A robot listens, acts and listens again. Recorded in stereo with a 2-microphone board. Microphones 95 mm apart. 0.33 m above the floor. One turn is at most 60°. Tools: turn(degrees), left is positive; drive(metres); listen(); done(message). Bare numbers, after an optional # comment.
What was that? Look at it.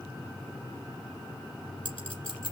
# The clink: about 70° left or 110° left.
turn(60)
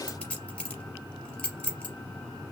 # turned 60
# So it is at 10° left.
turn(10)
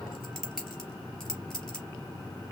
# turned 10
done("Found it: a clink, straight ahead.")